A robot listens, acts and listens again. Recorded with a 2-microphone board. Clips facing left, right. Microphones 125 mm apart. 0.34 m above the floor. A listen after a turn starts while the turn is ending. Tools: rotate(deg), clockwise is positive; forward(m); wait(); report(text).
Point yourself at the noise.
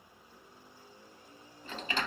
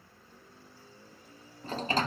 rotate(40)
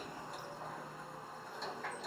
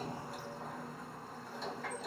report("Facing the sliding door, under 1 m away.")